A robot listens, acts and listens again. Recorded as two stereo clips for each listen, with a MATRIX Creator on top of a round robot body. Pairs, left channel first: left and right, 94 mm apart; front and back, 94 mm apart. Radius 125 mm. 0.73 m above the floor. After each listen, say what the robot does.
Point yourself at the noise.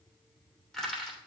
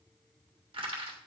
Turn 175° left.
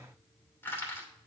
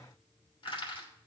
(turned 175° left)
Turn 25° left.
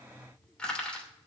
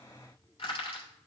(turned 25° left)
Turn 10° left.
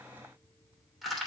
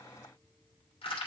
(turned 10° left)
Facing the crushing.